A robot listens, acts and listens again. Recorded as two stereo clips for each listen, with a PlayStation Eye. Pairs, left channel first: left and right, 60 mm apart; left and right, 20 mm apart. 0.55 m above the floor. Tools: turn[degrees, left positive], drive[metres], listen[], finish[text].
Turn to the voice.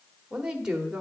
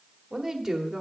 Action: turn[-30]
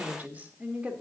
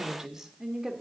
Thought: The woman speaking: about 20° right or 160° right.
Action: turn[-20]
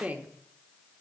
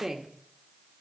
Thought: The woman speaking: about 25° right or 155° right.
Action: turn[-25]
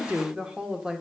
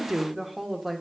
Action: turn[-30]
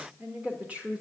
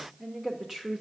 Thought: The woman speaking: about 20° right or 160° right.
Action: turn[-20]
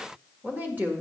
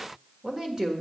Thought: So it is at 145° right.
Action: turn[-145]
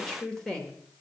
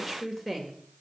Thought: The woman speaking is now 10° left.
Action: turn[10]
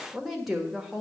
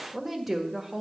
Action: finish[Found it: a woman speaking, straight ahead, 1 to 2 m away.]